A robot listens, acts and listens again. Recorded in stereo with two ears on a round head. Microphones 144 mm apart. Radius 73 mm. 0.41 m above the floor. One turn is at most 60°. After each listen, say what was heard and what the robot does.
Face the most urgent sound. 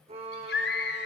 Turn 60° left.
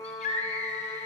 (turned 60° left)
So it is at 40° left. Turn 40° left.
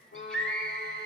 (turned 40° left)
Facing the scream.